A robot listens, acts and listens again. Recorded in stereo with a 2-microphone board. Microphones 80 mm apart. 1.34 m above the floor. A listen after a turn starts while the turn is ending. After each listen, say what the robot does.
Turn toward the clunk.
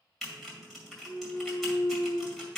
Turn 90° left.
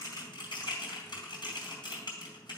Facing where the clunk came from. I can't hear it now.